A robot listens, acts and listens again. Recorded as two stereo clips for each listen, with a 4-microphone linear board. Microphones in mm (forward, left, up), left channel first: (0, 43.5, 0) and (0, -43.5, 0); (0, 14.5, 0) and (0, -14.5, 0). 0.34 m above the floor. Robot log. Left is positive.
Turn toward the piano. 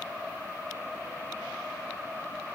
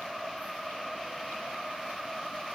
cmd idle
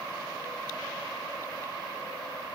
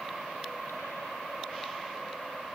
cmd idle
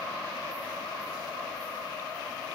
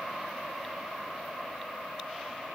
end: I can't make out a piano.